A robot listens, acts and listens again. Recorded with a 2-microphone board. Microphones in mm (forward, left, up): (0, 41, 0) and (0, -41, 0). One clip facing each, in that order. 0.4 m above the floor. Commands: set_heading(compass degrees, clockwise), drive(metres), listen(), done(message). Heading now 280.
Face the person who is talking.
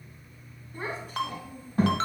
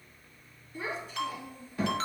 set_heading(225)
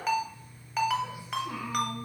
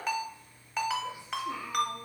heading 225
set_heading(160)
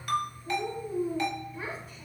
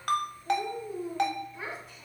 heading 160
done("Found it: a child speaking, straight ahead.")